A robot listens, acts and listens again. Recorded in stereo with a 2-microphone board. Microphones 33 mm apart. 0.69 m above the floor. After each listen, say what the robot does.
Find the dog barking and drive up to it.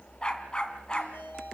Turn 30° left.
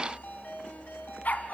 Turn 120° left.
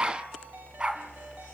Turn 30° right.
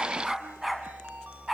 Drive 1.0 m forward.
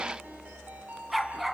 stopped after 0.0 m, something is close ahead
Blocked. The dog barking is further on, straight ahead.